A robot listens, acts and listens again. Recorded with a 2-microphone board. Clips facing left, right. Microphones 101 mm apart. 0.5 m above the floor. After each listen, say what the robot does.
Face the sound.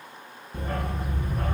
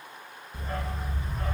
Turn 55° left.
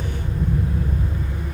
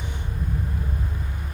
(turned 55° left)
Turn 70° left.
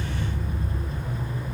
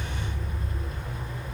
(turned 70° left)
Facing the dog barking, 2 to 4 m away.